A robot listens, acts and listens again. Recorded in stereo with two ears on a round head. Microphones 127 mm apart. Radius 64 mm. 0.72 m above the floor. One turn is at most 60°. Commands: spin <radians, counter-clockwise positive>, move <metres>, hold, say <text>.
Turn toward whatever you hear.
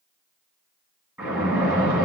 spin -0.52
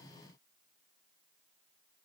hold
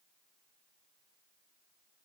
say I heard a splash, but can't make it out now. It was about 15° left or 135° right.